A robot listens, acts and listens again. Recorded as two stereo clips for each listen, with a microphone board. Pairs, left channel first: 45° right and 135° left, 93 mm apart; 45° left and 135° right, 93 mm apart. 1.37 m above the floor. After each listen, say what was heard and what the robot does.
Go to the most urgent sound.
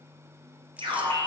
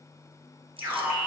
The alarm: 165° left. Turn 165° left.
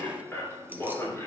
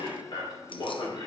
The alarm is now 25° left. Turn 25° left.
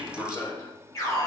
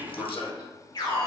The alarm is now 10° left. Turn 10° left.
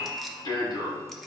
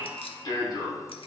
Drive 1.0 m forward.
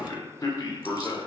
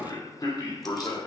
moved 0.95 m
Drive 1.0 m forward.
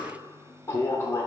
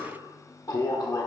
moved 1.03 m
The alarm is now 10° left. Turn 10° left.
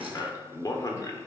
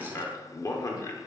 Drive 1.0 m forward.
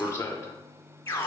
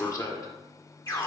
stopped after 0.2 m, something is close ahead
Arrived at the alarm, straight ahead.